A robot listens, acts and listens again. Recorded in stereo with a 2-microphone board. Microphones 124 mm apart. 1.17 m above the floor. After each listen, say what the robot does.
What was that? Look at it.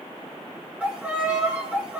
Turn 30° right.
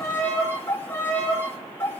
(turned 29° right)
Turn 20° left.
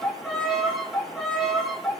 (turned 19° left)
Facing the violin.